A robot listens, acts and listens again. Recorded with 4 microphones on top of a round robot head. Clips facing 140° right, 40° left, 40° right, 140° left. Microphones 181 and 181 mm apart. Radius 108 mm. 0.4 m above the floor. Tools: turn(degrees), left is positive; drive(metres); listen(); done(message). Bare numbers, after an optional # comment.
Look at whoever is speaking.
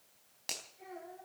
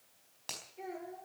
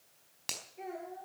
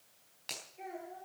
# The child speaking: 10° left.
turn(10)
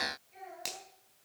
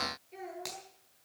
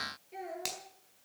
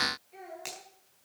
done("Found it: a child speaking, straight ahead.")